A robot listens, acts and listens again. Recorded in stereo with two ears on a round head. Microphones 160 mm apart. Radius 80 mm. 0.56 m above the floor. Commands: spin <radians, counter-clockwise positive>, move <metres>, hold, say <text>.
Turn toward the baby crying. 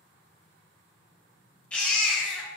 spin 0.52
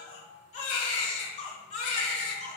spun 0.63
spin 2.36
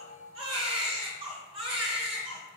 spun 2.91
spin -0.52
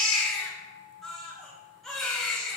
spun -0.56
say Found it: a baby crying, straight ahead.